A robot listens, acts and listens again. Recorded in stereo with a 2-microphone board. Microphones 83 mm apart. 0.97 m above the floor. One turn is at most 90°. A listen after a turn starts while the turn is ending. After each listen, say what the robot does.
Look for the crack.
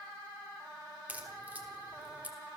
Turn 20° right.
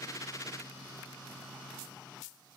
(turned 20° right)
Keep listening.
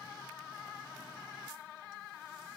I heard a crack, but can't make it out now. It was about straight ahead or 140° right.